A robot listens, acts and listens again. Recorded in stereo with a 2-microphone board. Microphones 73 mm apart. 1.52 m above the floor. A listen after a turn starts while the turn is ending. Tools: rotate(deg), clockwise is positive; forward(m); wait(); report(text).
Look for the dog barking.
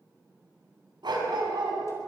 rotate(90)
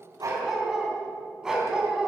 rotate(10)
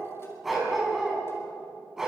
rotate(10)
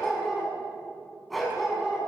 report("Found it: a dog barking, straight ahead.")